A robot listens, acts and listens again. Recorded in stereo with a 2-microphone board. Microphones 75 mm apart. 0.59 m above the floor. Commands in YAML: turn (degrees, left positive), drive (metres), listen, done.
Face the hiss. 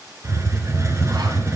turn: -40
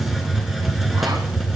done: "Facing the hiss."